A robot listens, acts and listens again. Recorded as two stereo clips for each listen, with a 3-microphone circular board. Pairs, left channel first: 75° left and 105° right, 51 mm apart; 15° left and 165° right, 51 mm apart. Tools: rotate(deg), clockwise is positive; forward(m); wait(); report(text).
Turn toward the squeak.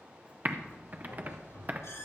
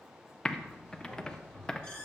rotate(-85)
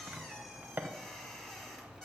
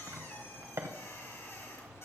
report("Found it: a squeak, straight ahead.")